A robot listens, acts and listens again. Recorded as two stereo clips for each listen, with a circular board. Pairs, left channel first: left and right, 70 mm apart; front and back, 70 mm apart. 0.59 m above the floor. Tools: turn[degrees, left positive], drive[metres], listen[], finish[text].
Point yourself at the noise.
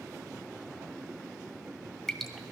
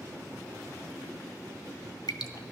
Action: finish[Facing the dripping.]